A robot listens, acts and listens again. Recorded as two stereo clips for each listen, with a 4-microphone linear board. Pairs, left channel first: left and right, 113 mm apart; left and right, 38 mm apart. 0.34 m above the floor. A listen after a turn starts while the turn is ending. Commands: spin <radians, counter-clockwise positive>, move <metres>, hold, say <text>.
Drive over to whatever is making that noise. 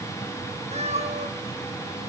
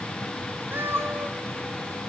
spin -1.57
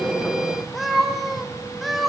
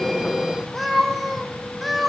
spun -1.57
move 1.0
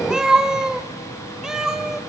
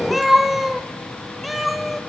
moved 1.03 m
move 1.0
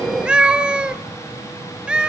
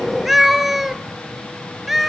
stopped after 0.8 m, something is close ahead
spin -0.17
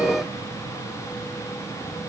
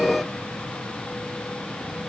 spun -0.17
hold
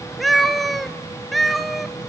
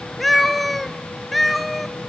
say Arrived at the cat meowing, straight ahead.